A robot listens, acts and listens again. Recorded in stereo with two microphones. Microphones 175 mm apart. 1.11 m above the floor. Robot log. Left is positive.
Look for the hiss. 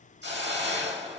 cmd yaw -90
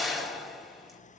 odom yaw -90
end: Facing the hiss, 1 to 2 m away.